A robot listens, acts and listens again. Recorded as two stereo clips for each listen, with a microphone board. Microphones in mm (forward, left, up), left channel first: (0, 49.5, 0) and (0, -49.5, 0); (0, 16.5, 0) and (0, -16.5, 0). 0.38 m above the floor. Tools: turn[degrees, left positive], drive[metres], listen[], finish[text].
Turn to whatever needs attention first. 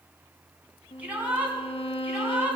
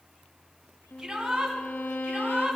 Action: turn[-30]
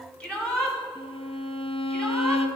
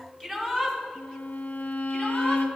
Thought: So it is at 10° left.
Action: turn[10]
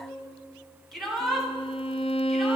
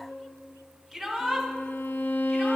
Action: finish[Found it: a shout, straight ahead, 2 to 4 m away.]